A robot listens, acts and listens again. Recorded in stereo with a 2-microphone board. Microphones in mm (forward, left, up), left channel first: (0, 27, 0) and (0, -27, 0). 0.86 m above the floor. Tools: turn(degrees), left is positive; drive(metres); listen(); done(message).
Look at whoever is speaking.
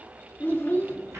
turn(degrees=35)
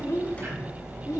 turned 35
turn(degrees=110)
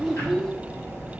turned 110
done("Facing the child speaking, under 1 m away.")